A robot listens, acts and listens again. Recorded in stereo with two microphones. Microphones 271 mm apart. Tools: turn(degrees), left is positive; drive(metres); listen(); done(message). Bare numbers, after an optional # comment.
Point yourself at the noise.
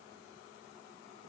listen()
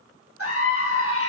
# The scream: about 55° left or 125° left.
turn(55)
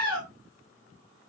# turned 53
# So it is at 65° left.
turn(65)
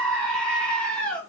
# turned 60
done("Found it: a scream, straight ahead.")